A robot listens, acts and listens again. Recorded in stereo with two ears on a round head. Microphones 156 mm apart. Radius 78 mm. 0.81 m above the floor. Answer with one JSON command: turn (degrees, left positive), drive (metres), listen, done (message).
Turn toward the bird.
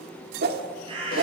{"turn": -35}
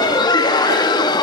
{"listen": true}
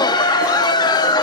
{"listen": true}
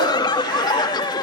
{"done": "I heard a bird, but can't make it out now. It was about straight ahead or 110° right."}